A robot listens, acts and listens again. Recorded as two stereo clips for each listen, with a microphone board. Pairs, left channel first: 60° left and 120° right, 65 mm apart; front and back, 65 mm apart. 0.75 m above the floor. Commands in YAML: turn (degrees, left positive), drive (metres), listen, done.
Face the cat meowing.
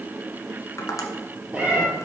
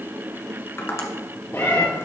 turn: -50
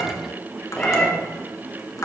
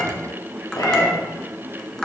turn: -15
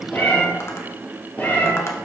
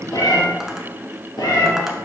done: "Found it: a cat meowing, straight ahead, 2 to 4 m away."